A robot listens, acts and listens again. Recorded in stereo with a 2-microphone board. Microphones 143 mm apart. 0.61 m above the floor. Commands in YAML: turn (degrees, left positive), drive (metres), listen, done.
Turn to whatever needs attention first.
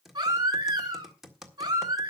turn: -25
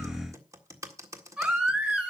done: "Facing the baby crying."